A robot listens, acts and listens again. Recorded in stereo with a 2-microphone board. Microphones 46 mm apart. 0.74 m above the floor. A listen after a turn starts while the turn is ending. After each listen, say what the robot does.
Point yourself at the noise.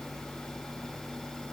Keep listening.
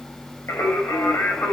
Turn 90° left.
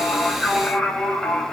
Turn 10° left.
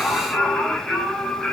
Found it: singing, straight ahead.